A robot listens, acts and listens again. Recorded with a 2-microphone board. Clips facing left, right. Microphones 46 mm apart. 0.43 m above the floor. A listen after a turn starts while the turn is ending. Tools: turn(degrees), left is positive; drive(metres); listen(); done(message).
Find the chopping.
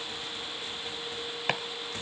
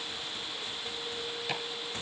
turn(degrees=55)
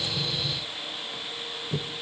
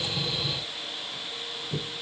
turn(degrees=15)
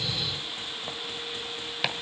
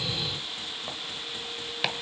done("Facing the chopping, 1 to 2 m away.")